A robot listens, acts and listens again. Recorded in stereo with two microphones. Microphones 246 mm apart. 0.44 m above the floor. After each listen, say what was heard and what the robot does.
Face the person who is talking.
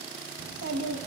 Turn 90° right.
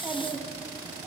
So it is at 10° right. Turn 10° right.
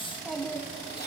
Found it: a child speaking, straight ahead, 1 to 2 m away.